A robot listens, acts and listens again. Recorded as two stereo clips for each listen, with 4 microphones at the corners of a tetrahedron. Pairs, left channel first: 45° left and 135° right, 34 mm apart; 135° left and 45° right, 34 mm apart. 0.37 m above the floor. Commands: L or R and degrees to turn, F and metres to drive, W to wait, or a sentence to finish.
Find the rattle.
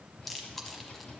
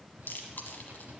R15
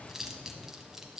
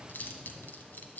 W
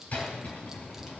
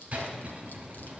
Facing the rattle.